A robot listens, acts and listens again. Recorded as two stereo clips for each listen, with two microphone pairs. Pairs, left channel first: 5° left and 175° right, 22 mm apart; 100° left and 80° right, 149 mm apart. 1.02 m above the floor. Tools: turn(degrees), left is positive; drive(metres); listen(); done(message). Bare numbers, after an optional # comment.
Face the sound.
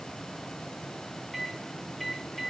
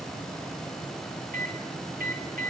# The microwave: 80° right.
turn(-80)
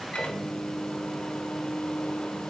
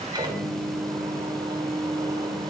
# The microwave is now 20° right.
turn(-20)
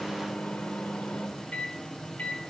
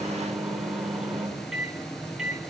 done("Found it: a microwave, straight ahead.")